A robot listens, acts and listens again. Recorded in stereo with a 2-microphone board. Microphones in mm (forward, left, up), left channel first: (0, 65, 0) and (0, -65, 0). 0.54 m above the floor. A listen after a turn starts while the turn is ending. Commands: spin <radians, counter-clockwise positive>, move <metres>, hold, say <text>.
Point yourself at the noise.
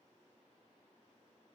hold
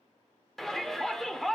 spin 0.52
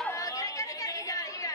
spin 2.53
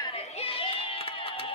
spin 1.05
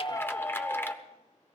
spin 0.35
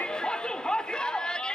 say Found it: a shout, straight ahead, 1 to 2 m away.